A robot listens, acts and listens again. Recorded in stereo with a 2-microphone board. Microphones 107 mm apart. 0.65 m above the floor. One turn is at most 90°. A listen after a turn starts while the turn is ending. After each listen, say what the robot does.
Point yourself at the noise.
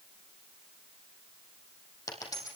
Turn 35° left.
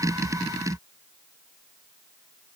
Keep listening.
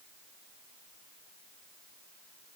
I heard a dropped coin, but can't make it out now. It was about straight ahead or 110° left.